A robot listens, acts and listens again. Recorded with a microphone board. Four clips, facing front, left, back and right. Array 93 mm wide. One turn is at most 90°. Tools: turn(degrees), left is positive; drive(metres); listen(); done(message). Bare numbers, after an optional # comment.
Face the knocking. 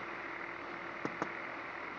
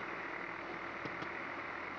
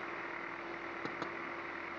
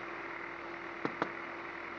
# The knocking: 70° right.
turn(-70)
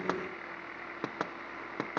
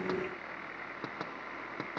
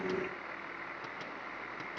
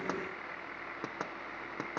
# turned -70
# The knocking is now 10° right.
turn(-10)
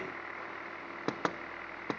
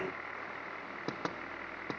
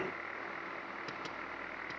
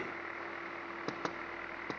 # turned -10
done("Facing the knocking.")